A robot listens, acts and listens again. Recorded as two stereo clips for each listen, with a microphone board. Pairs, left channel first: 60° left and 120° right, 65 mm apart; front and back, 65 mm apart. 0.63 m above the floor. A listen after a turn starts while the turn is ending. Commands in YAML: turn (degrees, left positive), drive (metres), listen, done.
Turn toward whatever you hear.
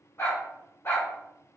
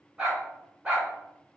turn: 110
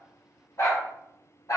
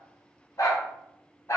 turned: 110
turn: 35
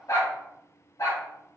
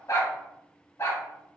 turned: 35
turn: 35
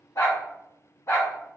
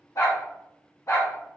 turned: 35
turn: 30
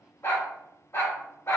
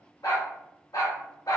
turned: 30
turn: 20
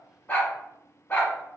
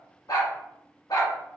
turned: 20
done: "Facing the dog barking."